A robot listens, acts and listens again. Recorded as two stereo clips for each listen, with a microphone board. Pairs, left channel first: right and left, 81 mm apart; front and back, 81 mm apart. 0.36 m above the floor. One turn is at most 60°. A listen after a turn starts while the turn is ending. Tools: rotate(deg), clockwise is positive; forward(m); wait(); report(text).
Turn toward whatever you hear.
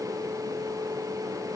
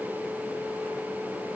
wait()
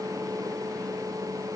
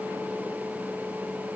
wait()
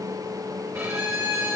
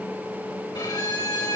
rotate(-35)
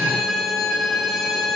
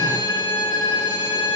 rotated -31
report("Facing the violin, over 4 m away.")